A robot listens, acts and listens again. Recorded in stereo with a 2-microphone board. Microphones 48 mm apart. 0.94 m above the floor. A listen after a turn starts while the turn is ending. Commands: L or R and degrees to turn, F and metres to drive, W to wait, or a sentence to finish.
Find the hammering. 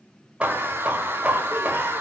R30
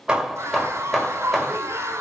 Found it: hammering, straight ahead, 1 to 2 m away.